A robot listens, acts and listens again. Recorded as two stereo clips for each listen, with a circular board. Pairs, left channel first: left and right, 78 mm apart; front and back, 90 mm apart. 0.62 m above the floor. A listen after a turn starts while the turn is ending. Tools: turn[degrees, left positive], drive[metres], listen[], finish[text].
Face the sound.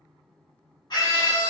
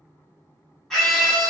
Thought: The scream: 85° left.
Action: turn[85]
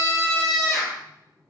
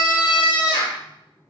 Action: finish[Facing the scream, 1 to 2 m away.]